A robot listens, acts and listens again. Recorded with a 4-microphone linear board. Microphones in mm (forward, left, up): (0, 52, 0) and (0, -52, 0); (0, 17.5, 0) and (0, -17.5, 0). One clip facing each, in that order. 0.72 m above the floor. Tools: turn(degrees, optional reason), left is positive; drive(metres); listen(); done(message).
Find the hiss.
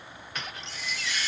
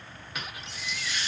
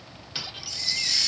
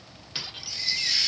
turn(degrees=-25, reason="The hiss: about 25° right or 155° right.")
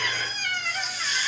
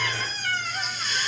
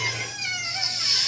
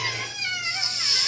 done("Facing the hiss.")